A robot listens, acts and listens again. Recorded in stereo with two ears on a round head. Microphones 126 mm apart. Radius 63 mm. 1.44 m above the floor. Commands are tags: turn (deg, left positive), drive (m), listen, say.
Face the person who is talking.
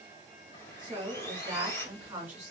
<turn deg="-30"/>
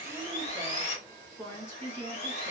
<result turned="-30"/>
<turn deg="20"/>
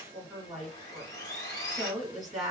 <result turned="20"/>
<say>Found it: a woman speaking, straight ahead.</say>